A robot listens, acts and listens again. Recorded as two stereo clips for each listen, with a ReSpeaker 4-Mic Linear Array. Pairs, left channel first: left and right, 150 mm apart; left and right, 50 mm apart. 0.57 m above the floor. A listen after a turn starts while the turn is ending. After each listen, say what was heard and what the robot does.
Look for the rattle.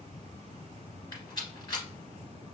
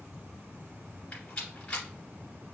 The rattle: about 30° left or 150° left. Turn 30° left.
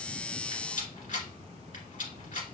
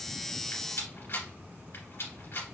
So it is at 120° left. Turn 120° left.
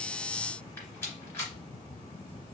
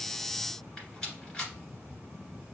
The rattle is now 15° left. Turn 15° left.
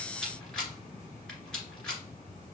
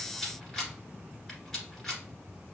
Facing the rattle.